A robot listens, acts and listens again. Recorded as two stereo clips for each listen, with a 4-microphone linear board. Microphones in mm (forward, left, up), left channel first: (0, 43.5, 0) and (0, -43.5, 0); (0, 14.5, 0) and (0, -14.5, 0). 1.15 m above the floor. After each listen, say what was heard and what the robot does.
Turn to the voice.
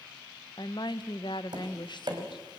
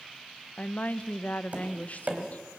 The woman speaking: about 60° left or 120° left. Turn 60° left.
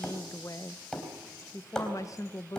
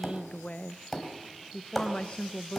So it is at 45° left. Turn 45° left.
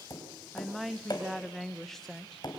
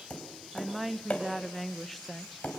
Found it: a woman speaking, straight ahead.